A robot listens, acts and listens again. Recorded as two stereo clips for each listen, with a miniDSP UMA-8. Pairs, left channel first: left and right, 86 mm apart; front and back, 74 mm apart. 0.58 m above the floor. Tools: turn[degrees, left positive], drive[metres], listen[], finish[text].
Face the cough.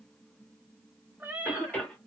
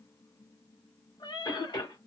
Thought: The cough: 15° left.
Action: turn[15]
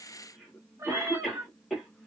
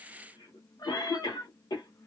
Action: finish[Found it: a cough, straight ahead.]